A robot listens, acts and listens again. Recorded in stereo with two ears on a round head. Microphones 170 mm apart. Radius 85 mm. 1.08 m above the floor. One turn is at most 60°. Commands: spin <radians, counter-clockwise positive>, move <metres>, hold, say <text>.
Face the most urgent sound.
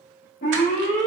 spin 0.61
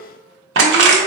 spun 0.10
hold
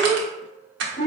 spin 0.52
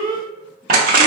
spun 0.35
spin 0.26
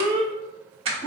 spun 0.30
say Facing the alarm, 1 to 2 m away.